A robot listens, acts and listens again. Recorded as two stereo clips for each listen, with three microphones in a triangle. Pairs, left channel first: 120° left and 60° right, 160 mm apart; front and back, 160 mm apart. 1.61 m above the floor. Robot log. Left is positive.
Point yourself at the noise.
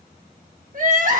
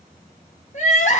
note: The crying: 35° right.
cmd yaw -35
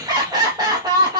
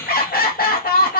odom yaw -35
end: Facing the crying.